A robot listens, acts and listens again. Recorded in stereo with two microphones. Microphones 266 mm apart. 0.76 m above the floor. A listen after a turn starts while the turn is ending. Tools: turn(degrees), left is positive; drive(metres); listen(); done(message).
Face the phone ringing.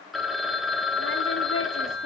turn(degrees=30)
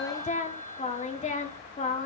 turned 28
turn(degrees=155)
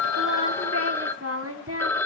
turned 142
turn(degrees=10)
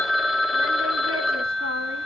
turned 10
done("Facing the phone ringing.")